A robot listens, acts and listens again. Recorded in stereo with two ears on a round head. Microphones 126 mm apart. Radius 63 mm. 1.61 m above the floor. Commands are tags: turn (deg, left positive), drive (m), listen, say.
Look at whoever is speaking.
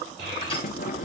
<turn deg="-45"/>
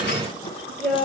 <say>Found it: a child speaking, straight ahead, over 4 m away.</say>